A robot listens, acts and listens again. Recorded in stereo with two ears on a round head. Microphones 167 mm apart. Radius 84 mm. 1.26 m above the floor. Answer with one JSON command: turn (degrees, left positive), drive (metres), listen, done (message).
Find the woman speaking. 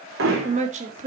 {"turn": -40}
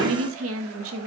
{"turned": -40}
{"turn": -100}
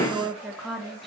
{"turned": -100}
{"done": "Facing the woman speaking, 2 to 4 m away."}